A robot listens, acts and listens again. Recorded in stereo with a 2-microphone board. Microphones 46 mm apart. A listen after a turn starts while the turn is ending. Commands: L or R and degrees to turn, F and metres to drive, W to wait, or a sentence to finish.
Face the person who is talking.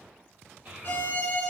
R30
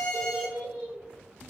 Found it: a child speaking, straight ahead, 1 to 2 m away.